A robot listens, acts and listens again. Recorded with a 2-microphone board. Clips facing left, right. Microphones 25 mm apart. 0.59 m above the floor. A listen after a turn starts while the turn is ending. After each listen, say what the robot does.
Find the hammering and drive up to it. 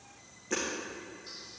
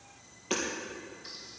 Turn 55° right.
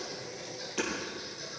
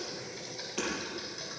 Drive 1.0 m forward.
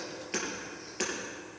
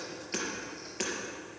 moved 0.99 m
Drive 1.0 m forward.
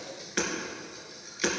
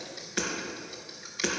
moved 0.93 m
Drive 1.0 m forward.
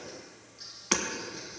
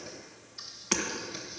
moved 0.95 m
Turn 10° left.
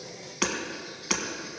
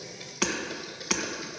Drive 1.0 m forward.
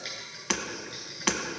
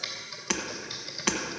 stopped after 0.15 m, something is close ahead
Arrived at the hammering, straight ahead.